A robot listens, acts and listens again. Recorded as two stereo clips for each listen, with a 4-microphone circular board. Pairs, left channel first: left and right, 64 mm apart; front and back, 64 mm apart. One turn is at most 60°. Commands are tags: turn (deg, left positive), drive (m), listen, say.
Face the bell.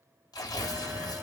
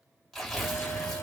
<turn deg="-30"/>
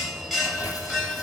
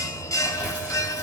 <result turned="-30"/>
<say>Found it: a bell, straight ahead, 1 to 2 m away.</say>